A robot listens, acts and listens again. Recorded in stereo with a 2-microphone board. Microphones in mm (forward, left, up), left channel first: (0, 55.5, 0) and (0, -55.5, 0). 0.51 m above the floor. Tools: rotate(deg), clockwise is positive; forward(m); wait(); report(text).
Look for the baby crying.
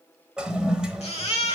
rotate(-65)
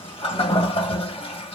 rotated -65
wait()
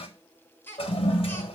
rotate(-20)
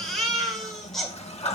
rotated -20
report("Facing the baby crying, 1 to 2 m away.")